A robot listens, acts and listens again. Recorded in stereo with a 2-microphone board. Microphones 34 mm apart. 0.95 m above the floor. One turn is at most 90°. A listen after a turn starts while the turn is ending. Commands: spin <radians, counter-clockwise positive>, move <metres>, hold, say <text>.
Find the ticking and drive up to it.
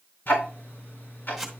spin 1.57
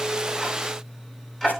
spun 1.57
spin 0.17
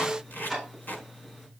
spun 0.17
move 1.0
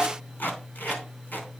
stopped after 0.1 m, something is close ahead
say Blocked. The ticking is further on, straight ahead.